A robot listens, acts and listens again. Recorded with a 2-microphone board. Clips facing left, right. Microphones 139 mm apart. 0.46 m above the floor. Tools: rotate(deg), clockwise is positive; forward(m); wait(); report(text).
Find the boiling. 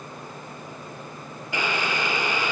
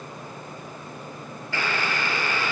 rotate(-15)
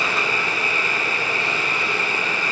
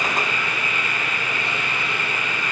rotate(-150)
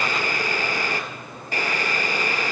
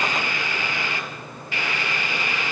rotate(-45)
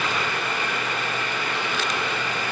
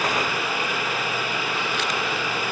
report("Facing the boiling, 1 to 2 m away.")